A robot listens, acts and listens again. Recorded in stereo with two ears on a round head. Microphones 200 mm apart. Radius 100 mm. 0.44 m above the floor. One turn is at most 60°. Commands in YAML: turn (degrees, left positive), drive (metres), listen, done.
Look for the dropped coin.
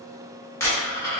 turn: 30
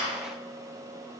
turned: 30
turn: 60
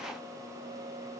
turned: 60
turn: 60
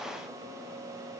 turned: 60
turn: 15
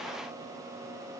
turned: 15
done: "Facing where the dropped coin came from. I can't hear it now."